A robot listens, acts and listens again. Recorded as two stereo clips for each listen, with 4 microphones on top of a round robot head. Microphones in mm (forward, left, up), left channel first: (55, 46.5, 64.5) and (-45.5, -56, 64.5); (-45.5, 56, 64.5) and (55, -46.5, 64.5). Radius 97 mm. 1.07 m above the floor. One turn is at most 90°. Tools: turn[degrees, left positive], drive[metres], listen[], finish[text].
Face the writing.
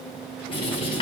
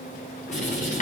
Thought: The writing: 100° left.
Action: turn[90]
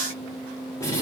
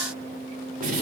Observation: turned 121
Thought: The writing is now 25° right.
Action: turn[-25]
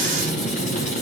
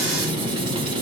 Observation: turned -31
Thought: The writing is now 10° left.
Action: turn[10]
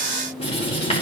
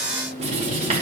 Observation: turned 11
Action: finish[Found it: writing, straight ahead.]